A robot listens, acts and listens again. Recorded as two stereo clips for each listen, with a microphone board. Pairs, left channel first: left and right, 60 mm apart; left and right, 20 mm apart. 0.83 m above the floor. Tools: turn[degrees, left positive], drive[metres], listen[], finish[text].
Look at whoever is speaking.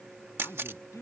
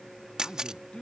Thought: The man speaking: about 60° left or 120° left.
Action: turn[60]
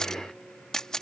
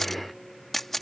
Action: listen[]
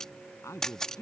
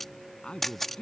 Thought: So it is at 55° left.
Action: turn[55]
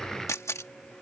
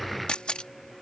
Action: listen[]
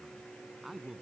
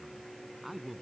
Action: finish[Found it: a man speaking, straight ahead.]